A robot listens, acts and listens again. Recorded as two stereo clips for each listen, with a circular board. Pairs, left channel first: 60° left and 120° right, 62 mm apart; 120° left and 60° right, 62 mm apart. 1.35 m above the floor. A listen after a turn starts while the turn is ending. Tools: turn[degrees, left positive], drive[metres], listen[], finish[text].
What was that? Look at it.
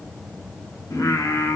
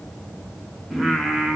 Thought: The singing: 25° left.
Action: turn[25]
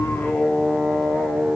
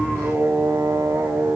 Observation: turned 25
Thought: The singing is now 25° right.
Action: turn[-25]
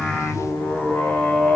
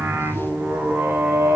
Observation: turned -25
Thought: The singing is now 10° right.
Action: turn[-10]
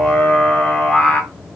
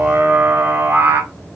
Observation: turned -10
Thought: The singing is now 15° right.
Action: turn[-15]
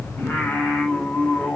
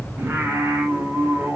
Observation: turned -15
Action: finish[Facing the singing, 2 to 4 m away.]